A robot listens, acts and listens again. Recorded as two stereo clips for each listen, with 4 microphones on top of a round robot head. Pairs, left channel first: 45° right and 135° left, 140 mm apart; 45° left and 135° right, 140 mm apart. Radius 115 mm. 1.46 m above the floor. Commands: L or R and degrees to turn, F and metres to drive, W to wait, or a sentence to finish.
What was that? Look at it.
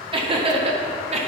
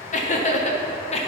L90
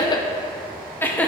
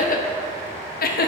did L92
L35
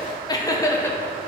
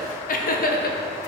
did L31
L30
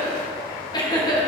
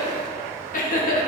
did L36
L20
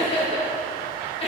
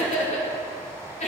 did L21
Found it: laughter, straight ahead.